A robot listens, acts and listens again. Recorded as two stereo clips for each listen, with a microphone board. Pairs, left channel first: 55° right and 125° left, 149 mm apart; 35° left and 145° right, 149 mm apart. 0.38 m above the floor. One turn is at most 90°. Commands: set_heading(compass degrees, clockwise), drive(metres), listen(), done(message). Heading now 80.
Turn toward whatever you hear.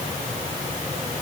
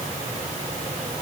listen()
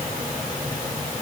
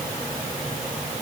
listen()
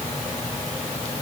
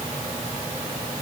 done("I can't make out anything to turn to.")